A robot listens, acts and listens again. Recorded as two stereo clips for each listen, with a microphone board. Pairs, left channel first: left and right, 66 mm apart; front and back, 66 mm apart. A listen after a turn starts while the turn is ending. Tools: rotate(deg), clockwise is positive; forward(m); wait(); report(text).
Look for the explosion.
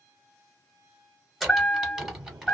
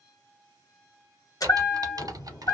rotate(60)
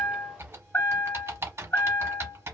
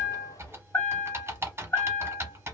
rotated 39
rotate(20)
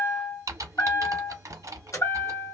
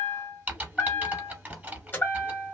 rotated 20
report("I heard an explosion from this way, but can't make it out now.")